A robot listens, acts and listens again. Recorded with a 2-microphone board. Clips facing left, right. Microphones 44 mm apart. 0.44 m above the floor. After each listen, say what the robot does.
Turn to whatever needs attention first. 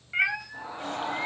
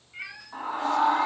Turn 70° right.
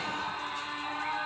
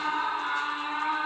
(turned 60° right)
Turn 20° right.
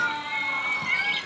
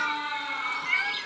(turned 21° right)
Facing the scream, over 4 m away.